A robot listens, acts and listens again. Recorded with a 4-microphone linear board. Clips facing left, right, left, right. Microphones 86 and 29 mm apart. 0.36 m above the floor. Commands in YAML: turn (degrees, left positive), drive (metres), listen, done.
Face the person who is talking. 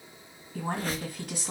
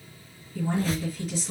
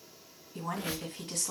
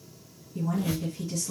turn: 65
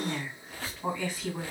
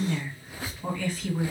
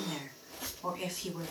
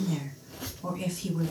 turn: 15
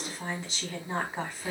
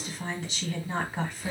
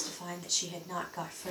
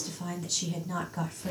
done: "Facing the woman speaking."